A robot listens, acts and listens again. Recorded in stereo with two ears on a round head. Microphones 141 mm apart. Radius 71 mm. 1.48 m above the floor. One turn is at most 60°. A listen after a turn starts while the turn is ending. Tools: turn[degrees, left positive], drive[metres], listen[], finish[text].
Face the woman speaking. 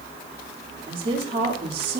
Thought: The woman speaking: about 40° right or 140° right.
Action: turn[-40]
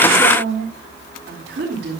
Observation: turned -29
Thought: So it is at 100° right.
Action: turn[-60]
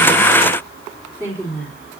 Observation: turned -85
Thought: The woman speaking is now 10° right.
Action: turn[-10]
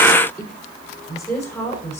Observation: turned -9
Action: finish[Found it: a woman speaking, straight ahead.]